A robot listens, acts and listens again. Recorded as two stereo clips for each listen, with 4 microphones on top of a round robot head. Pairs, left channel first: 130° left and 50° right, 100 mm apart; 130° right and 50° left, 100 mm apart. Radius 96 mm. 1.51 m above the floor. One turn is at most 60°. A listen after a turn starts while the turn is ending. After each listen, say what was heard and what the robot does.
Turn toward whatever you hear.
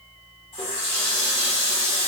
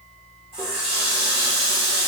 The running tap: 90° left. Turn 60° left.
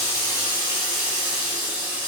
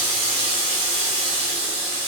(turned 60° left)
The running tap is now 20° left. Turn 20° left.
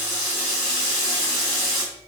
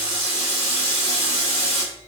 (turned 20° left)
The running tap is now 10° left. Turn 10° left.
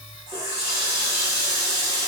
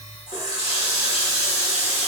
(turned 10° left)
Found it: a running tap, straight ahead.